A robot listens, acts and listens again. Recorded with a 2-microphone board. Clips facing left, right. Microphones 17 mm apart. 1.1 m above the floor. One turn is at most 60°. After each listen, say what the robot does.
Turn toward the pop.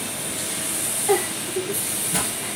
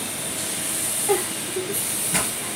Turn 20° right.
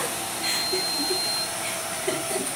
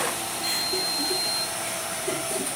Keep listening.
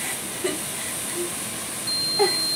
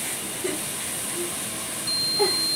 I heard a pop, but can't make it out now. It was about straight ahead or 140° right.